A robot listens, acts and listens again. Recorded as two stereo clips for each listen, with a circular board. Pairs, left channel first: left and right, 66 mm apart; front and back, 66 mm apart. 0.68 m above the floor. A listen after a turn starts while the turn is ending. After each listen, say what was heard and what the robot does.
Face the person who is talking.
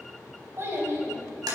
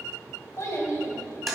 The child speaking: 40° right. Turn 40° right.
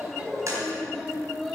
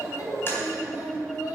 Facing the child speaking.